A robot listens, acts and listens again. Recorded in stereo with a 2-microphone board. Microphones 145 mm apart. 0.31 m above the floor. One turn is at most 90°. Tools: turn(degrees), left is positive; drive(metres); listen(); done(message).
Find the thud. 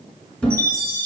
turn(degrees=30)
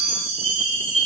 listen()
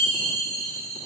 done("I heard a thud, but can't make it out now. It was about 25° right or 145° left.")